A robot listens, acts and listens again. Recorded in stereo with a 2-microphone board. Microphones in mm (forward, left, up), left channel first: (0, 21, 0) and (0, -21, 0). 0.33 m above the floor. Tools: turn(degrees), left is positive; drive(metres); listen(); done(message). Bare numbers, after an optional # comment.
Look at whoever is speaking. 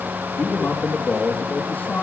# The man speaking: about 45° left or 135° left.
turn(45)
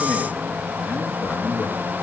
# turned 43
# So it is at 90° left.
turn(90)
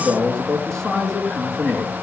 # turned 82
# The man speaking is now 10° left.
turn(10)
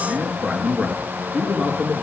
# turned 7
done("Found it: a man speaking, straight ahead, over 4 m away.")